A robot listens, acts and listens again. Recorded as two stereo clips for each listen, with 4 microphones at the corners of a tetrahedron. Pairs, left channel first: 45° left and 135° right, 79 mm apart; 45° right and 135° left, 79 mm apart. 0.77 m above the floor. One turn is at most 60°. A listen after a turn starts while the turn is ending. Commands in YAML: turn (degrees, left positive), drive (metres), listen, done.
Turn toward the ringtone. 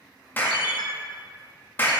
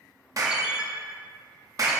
turn: 55
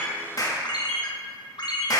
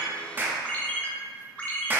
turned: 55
turn: 30
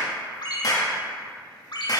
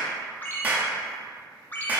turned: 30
turn: 20
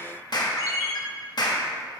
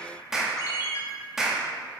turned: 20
done: "Facing the ringtone."